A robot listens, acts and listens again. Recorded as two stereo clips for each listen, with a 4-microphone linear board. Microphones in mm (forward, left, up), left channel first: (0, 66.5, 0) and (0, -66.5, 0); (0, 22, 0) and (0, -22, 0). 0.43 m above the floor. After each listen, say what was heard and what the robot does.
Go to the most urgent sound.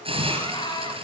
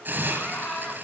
The scream: about 35° left or 145° left. Turn 35° left.
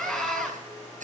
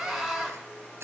Drive 1.0 m forward.
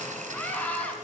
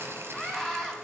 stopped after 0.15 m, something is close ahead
The scream is now 15° left. Turn 15° left.
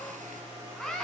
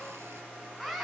Blocked. The scream is further on, straight ahead.